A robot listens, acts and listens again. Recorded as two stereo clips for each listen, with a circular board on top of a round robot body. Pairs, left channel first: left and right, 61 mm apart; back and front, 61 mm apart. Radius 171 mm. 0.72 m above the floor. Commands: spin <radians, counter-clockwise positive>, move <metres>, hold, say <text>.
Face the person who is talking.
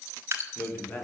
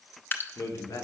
spin 2.53
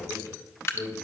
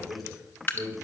spin 0.87
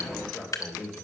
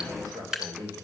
say Facing the man speaking.